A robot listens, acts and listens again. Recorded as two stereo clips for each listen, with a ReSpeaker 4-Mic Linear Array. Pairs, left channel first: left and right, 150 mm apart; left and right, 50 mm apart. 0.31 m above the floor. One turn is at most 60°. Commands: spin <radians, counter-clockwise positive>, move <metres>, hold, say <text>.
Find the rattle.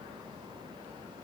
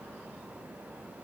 hold
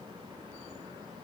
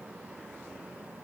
hold
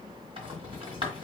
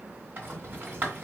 spin -0.70
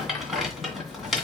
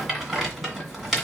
say Facing the rattle.